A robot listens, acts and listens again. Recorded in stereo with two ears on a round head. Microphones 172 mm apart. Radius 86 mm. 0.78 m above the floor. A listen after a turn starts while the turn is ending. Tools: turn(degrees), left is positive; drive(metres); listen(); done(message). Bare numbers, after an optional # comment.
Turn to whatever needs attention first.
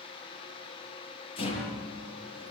listen()
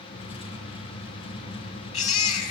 # The baby crying: about 35° left or 145° left.
turn(35)
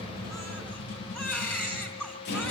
done("Found it: a baby crying, straight ahead.")